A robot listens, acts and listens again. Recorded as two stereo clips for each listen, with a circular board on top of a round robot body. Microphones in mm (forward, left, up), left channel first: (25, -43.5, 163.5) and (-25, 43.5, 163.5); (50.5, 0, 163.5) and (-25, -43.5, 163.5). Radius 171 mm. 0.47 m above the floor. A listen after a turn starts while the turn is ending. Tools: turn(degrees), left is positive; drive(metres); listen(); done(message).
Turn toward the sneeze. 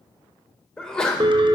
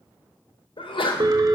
turn(degrees=25)
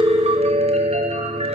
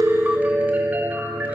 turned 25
done("Facing where the sneeze came from. I can't hear it now.")